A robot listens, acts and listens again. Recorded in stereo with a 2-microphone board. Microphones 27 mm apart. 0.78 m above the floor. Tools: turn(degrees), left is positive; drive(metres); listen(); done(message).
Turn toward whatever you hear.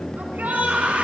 turn(degrees=-90)
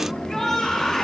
turn(degrees=15)
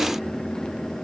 listen()
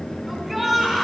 done("Facing the shout, over 4 m away.")